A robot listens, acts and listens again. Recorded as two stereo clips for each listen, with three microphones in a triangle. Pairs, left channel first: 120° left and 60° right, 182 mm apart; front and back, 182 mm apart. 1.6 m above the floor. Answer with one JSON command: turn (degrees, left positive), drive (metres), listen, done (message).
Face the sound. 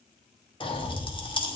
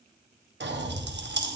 {"turn": 180}
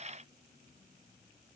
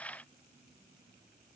{"done": "I heard a pop from this way, but can't make it out now."}